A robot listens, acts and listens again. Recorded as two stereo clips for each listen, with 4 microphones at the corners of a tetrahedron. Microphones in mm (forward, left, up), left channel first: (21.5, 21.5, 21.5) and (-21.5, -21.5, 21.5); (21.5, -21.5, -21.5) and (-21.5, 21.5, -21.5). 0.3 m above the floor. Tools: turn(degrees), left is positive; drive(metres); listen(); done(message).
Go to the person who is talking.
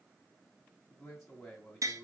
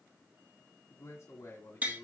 turn(degrees=-40)
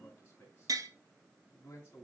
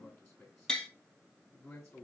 drive(metres=1.0)
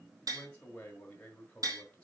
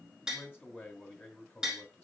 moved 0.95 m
turn(degrees=-10)
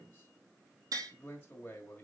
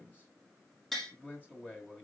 drive(metres=1.0)
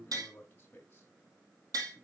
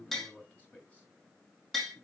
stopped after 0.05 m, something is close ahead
done("I am next to the man speaking.")